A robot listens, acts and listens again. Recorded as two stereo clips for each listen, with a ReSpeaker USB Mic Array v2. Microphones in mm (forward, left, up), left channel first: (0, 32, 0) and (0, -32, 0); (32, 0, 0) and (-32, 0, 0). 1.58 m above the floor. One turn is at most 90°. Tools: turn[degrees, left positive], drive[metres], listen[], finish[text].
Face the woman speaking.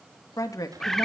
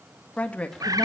Thought: The woman speaking: 70° left.
Action: turn[70]
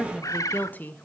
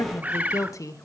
Thought: The woman speaking is now 30° left.
Action: turn[30]
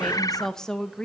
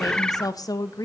Thought: The woman speaking is now 15° left.
Action: turn[15]
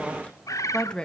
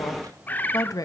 Thought: The woman speaking is now 15° left.
Action: turn[15]
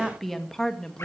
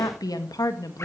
Thought: The woman speaking is now 10° left.
Action: turn[10]
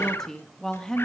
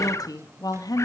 Thought: The woman speaking is now 10° left.
Action: turn[10]
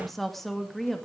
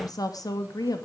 Action: finish[Found it: a woman speaking, straight ahead, 2 to 4 m away.]